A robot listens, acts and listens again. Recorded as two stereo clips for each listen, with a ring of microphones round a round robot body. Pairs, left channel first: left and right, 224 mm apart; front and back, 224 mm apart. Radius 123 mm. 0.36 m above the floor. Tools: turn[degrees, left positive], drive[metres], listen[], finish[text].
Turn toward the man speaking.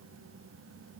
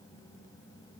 Action: listen[]
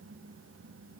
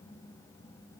Action: listen[]
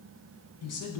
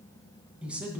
Thought: The man speaking: 95° left.
Action: turn[95]
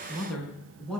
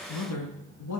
Action: finish[Found it: a man speaking, straight ahead.]